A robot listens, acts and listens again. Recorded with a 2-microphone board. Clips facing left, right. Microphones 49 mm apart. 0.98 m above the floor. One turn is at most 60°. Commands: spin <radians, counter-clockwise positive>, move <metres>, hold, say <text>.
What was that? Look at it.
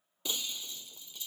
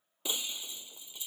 spin -0.26
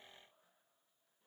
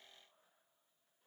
hold
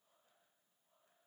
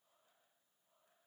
say I heard breaking glass, but can't make it out now. It was about straight ahead or 150° right.